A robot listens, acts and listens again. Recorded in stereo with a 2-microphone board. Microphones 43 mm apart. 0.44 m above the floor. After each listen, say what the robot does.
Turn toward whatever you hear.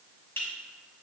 Turn 60° left.
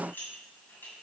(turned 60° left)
Turn 55° left.
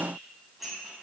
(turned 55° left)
Found it: dishes clattering, straight ahead.